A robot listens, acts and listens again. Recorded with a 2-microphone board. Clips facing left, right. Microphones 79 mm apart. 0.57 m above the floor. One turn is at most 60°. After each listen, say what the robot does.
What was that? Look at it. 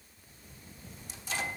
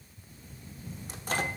Turn 50° right.
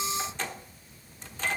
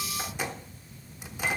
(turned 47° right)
Turn 15° right.
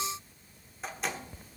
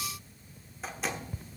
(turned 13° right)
Found it: a microwave, straight ahead.